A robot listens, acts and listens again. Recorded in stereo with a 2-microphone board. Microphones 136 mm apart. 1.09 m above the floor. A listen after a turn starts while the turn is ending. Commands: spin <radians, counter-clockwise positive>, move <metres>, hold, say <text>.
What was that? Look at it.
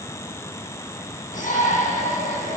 spin 1.57
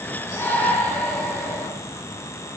spin 0.26
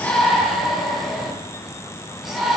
say Found it: a shout, straight ahead.